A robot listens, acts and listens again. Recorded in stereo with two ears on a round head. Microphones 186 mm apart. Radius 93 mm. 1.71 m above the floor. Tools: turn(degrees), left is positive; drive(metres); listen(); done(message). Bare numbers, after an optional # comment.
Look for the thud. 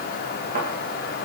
# The thud: about 45° right or 135° right.
turn(-45)
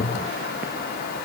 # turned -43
listen()
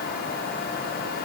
done("I heard a thud, but can't make it out now. It was about straight ahead or 95° right.")